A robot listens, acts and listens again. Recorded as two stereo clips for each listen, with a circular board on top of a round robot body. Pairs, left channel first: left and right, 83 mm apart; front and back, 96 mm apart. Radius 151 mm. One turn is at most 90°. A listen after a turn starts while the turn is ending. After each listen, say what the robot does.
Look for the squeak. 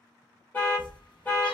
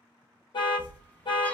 Turn 70° left.
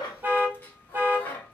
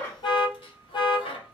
Turn 25° left.
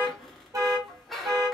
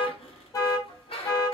Found it: a squeak, straight ahead.